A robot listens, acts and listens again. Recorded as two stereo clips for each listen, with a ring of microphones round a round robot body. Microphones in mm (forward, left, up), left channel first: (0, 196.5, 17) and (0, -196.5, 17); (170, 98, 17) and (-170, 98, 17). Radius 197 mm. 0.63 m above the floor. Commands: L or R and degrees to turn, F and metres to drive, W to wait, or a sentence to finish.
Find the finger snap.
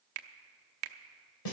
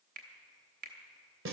R115
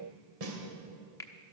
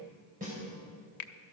L10
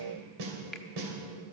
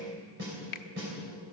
Found it: a finger snap, straight ahead, under 1 m away.